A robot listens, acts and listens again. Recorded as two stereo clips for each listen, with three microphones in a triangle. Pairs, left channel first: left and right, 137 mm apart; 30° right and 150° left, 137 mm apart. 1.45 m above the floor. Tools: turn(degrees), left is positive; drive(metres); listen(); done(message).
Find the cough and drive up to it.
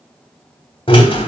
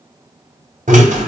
listen()
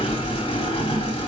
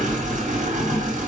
listen()
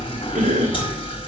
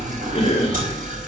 turn(degrees=-70)
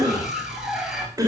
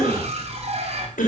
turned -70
turn(degrees=-25)
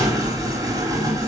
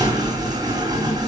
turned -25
listen()
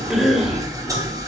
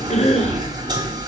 drive(metres=1.0)
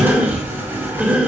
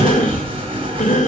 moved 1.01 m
turn(degrees=-10)
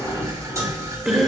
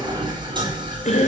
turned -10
drive(metres=1.0)
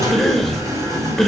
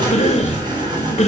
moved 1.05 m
drive(metres=1.0)
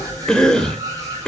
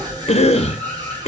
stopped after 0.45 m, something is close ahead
done("I am next to the cough.")